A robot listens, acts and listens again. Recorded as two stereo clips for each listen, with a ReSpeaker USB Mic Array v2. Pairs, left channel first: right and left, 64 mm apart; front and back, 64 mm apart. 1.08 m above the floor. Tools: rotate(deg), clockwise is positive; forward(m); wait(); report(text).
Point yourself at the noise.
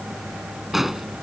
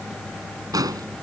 rotate(-175)
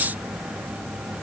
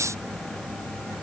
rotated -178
report("I heard an explosion from this way, but can't make it out now.")